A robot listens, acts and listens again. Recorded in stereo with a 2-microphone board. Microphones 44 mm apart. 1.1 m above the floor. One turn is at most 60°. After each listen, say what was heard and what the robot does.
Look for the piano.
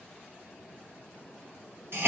Keep listening.
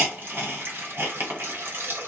Keep listening.
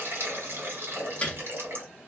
The piano: about 25° left or 155° left. Turn 25° left.
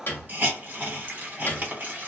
So it is at 125° left. Turn 60° left.
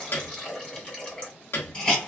The piano is now 60° left. Turn 60° left.
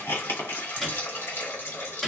Facing the piano, 1 to 2 m away.